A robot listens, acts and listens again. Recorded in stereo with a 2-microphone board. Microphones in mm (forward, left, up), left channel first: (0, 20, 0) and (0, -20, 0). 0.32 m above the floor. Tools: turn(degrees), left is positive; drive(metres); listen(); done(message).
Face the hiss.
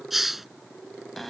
turn(degrees=-30)
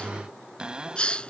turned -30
turn(degrees=25)
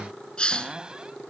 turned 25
turn(degrees=25)
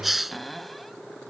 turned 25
done("Found it: a hiss, straight ahead.")